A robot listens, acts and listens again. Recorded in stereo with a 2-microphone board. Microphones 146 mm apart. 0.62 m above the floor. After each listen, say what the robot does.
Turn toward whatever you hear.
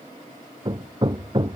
Turn 30° right.
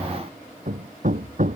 Turn 120° right.
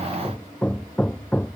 Turn 10° left.
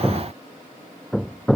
Facing the hammering.